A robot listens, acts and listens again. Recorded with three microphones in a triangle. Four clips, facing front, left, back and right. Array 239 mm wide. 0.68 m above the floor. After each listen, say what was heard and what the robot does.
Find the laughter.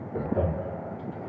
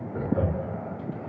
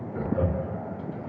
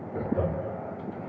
The laughter: 15° left. Turn 15° left.
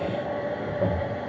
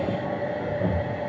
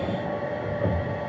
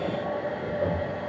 Keep listening.
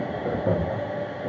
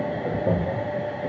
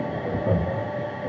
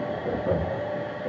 The laughter is now 35° left. Turn 35° left.
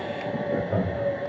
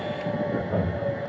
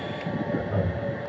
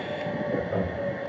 The laughter is now 25° left. Turn 25° left.
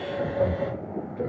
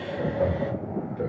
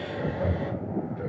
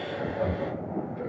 The laughter is now 20° left. Turn 20° left.
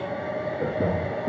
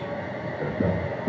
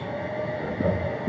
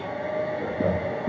Facing the laughter.